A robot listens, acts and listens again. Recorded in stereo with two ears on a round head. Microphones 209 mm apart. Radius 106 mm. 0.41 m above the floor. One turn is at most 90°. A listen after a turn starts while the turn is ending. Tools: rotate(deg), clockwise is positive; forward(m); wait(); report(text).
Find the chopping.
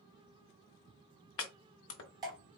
rotate(-60)
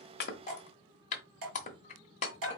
rotate(-35)
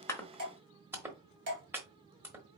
rotate(10)
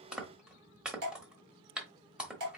report("Facing the chopping.")